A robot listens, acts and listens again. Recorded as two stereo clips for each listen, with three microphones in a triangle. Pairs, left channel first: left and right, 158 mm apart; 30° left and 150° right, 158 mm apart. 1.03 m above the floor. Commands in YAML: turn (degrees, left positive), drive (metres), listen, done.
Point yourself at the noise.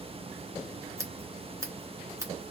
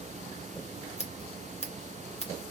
turn: -20
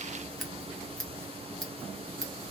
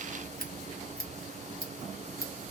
done: "Facing the scissors, 1 to 2 m away."